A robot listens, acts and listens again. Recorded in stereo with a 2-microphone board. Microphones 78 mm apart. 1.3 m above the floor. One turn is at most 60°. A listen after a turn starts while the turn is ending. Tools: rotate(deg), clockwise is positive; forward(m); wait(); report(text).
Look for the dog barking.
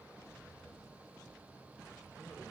wait()
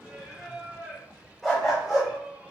rotate(-30)
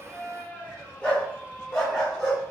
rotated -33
rotate(-30)
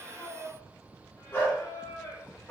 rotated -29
rotate(-60)
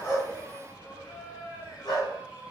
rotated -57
rotate(-60)
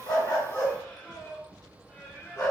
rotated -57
rotate(-35)
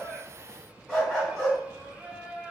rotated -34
report("Facing the dog barking, 1 to 2 m away.")